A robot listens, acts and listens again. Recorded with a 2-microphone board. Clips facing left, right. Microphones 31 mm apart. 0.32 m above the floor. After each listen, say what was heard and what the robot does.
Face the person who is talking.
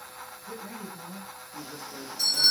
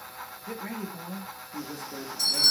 The man speaking: about 65° right or 115° right. Turn 65° right.
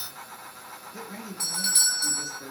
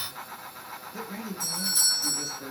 Found it: a man speaking, straight ahead, over 4 m away.